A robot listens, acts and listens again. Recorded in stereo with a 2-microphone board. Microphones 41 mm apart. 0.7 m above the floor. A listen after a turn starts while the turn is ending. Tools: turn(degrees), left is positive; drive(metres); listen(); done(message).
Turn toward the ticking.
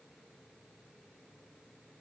listen()
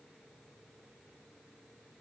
listen()
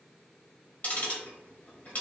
turn(degrees=40)
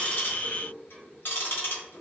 turn(degrees=90)
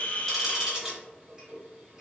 turn(degrees=-20)
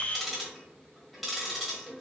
done("Facing the ticking.")